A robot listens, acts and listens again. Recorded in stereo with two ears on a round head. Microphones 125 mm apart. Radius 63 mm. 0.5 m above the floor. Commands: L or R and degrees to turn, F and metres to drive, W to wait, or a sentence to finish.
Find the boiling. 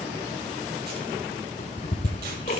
W
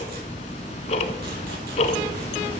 W
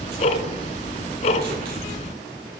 I can't make out boiling to turn to.